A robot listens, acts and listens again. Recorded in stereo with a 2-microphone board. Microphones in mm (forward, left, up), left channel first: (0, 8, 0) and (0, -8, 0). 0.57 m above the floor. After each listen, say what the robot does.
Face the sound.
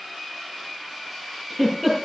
Turn 30° left.
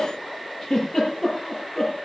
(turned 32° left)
Turn 150° left.
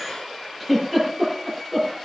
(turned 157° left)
Turn 10° right.
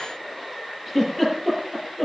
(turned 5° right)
Found it: a giggle, straight ahead.